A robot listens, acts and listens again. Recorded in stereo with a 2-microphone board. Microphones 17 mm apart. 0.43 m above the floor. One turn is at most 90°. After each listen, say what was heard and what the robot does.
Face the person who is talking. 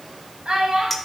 The child speaking: about 70° right or 110° right. Turn 70° right.
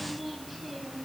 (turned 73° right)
So it is at 15° right. Turn 15° right.
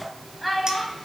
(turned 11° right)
Found it: a child speaking, straight ahead, 2 to 4 m away.